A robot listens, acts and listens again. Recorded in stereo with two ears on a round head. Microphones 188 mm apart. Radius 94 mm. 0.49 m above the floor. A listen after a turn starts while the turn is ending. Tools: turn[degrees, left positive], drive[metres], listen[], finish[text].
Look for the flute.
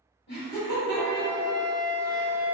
Thought: The flute: about 20° left or 160° left.
Action: turn[20]
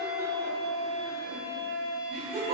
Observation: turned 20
Action: finish[Facing the flute, 1 to 2 m away.]